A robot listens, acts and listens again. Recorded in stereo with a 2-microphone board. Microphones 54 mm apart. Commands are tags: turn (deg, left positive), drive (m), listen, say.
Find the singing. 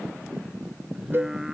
<turn deg="-30"/>
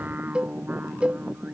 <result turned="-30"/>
<turn deg="-150"/>
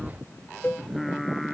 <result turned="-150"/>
<say>Facing the singing.</say>